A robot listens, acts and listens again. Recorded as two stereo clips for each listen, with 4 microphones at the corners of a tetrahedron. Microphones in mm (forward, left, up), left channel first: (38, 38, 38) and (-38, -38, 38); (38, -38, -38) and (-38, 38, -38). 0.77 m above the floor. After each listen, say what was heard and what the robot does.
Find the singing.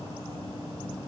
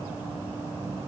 Keep listening.
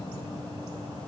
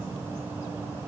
Keep listening.
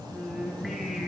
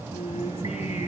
The singing: 45° right. Turn 45° right.
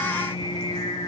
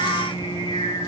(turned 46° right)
Facing the singing, over 4 m away.